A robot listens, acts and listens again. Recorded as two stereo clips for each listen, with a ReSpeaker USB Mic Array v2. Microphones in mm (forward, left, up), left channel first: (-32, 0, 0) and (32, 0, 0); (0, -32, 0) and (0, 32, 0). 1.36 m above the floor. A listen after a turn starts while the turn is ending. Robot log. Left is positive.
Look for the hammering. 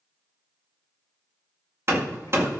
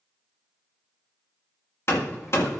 note: The hammering: 45° right.
cmd yaw -45
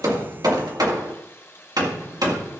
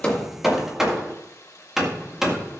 note: The hammering is now 10° left.
cmd yaw +10
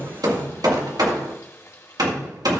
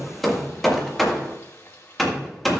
end: Facing the hammering, 1 to 2 m away.